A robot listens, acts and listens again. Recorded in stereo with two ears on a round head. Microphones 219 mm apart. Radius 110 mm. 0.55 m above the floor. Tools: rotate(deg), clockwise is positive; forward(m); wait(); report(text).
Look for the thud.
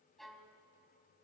wait()
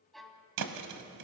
rotate(90)
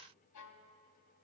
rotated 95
report("I heard a thud from this way, but can't make it out now.")